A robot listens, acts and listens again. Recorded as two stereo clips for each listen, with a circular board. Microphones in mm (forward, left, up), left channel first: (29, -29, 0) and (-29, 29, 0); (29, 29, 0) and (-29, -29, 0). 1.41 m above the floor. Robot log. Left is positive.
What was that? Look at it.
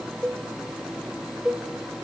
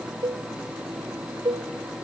note: The cowbell: 140° right.
cmd yaw -140
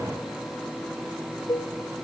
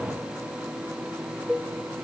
note: The cowbell is now 40° right.
cmd yaw -40
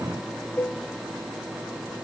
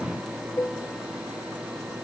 note: The cowbell is now 15° left.
cmd yaw +15
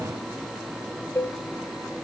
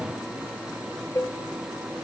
end: Found it: a cowbell, straight ahead, 1 to 2 m away.